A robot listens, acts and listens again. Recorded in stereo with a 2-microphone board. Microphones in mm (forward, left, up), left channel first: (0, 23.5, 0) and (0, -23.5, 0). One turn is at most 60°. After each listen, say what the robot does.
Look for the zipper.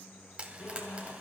Turn 45° left.
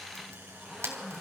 Found it: a zipper, straight ahead.